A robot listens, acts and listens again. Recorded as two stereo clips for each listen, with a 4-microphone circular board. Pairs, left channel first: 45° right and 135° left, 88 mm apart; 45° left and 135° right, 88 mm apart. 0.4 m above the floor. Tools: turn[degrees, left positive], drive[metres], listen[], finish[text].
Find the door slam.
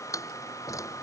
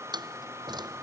Thought: The door slam: 100° right.
Action: turn[-100]
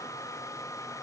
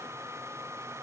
Action: finish[Facing where the door slam came from. I can't hear it now.]